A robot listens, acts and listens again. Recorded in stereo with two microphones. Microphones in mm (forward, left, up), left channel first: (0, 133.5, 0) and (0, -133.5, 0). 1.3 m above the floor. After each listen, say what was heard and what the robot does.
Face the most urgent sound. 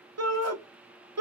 Turn 90° right.
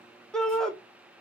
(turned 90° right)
Facing the shout, under 1 m away.